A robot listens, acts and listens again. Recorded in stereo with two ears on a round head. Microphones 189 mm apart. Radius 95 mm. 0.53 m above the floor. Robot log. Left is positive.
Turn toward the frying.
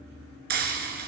note: The frying: about 50° right or 130° right.
cmd yaw -50
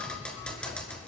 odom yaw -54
end: Facing the frying.